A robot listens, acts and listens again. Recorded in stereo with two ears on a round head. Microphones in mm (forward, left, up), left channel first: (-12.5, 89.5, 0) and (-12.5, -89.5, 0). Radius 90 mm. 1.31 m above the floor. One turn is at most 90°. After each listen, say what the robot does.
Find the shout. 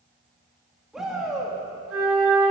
Turn 30° left.
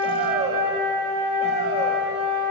Turn 30° right.
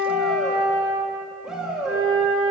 Found it: a shout, straight ahead, 2 to 4 m away.